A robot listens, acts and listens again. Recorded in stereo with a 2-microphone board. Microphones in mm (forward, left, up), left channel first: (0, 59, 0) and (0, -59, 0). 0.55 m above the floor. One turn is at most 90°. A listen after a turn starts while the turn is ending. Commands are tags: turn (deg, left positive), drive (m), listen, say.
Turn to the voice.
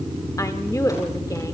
<turn deg="30"/>
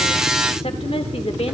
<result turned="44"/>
<turn deg="90"/>
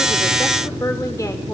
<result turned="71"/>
<turn deg="35"/>
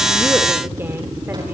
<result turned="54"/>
<turn deg="-20"/>
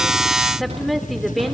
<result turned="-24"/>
<say>Facing the woman speaking, 1 to 2 m away.</say>